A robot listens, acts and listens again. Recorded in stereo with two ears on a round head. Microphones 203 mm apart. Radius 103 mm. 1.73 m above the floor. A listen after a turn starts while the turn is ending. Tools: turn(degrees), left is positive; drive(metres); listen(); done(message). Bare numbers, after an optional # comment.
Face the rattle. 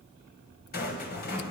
# The rattle: about 40° left or 140° left.
turn(40)
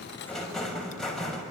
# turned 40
done("Facing the rattle.")